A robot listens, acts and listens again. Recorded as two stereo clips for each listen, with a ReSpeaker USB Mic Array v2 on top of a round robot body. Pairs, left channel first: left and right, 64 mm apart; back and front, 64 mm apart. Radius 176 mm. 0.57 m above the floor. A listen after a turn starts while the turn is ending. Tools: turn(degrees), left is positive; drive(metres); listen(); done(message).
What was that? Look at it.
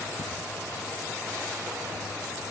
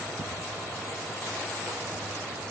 listen()
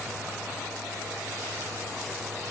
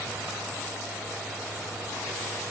listen()
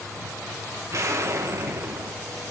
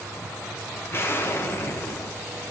turn(degrees=-130)
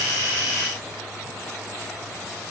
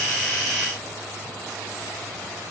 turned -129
done("Facing where the explosion came from. I can't hear it now.")